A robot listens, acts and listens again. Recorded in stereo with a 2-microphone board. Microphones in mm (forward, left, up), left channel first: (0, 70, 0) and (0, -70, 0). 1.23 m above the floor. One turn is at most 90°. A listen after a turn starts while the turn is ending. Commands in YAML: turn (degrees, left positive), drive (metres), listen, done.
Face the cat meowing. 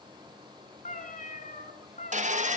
turn: 70
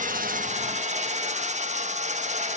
listen: true
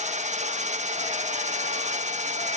listen: true
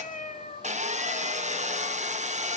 turn: 60
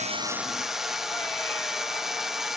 listen: true
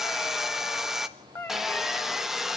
turn: 15
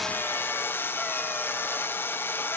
listen: true
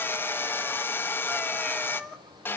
done: "Facing the cat meowing, 2 to 4 m away."